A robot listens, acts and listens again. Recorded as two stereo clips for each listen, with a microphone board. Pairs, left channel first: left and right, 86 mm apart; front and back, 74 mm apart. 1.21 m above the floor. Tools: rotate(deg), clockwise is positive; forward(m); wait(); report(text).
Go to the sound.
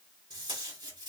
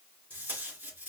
rotate(115)
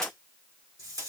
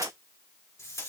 rotate(40)
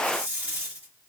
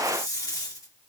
rotate(20)
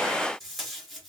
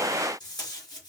forward(1.0)
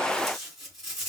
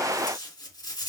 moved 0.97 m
forward(1.0)
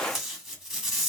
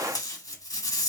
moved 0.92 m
forward(1.0)
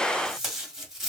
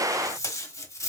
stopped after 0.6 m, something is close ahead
rotate(10)
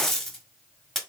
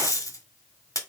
report("Arrived at the tape being pulled, straight ahead.")